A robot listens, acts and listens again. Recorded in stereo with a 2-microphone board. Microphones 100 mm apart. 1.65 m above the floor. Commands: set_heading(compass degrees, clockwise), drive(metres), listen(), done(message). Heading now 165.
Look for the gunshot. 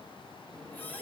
listen()
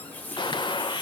set_heading(120)
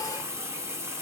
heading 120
listen()
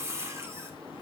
done("I heard a gunshot, but can't make it out now. It was about straight ahead or 90° left.")